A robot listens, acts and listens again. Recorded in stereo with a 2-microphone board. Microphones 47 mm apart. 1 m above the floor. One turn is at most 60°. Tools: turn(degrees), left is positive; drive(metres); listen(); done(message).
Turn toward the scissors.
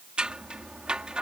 turn(degrees=-20)
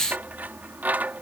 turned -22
turn(degrees=-60)
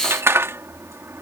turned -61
turn(degrees=-60)
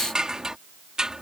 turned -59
turn(degrees=-20)
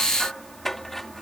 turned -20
done("Facing the scissors.")